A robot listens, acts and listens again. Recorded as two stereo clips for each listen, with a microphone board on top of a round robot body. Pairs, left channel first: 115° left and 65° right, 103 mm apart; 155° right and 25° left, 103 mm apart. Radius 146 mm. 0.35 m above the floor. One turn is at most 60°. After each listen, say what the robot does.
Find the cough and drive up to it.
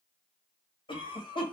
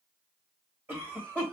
Turn 60° left.
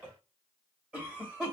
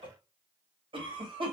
Turn 15° left.
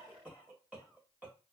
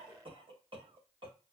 Drive 1.0 m forward.
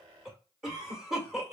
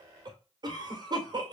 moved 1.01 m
Turn 15° left.
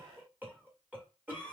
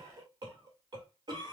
Drive 1.0 m forward.
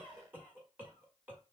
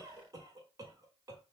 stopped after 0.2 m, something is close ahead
Arrived at the cough, straight ahead.